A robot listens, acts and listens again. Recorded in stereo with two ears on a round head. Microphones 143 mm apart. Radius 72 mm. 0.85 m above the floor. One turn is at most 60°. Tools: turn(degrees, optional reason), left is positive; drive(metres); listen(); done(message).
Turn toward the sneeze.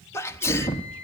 turn(degrees=20, reason="The sneeze: about 20° left or 160° left.")
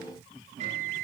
listen()
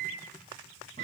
done("I heard a sneeze, but can't make it out now. It was about straight ahead or 140° left.")